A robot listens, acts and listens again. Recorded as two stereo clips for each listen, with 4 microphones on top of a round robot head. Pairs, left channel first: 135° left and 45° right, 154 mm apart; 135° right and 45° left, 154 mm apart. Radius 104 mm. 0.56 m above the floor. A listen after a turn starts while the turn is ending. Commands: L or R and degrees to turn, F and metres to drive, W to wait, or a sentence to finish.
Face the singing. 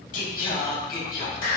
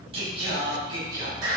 L110
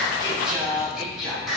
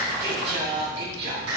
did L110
L45
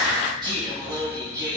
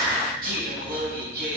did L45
L25
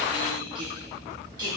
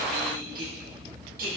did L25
L20
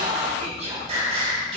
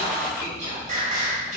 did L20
Found it: singing, straight ahead.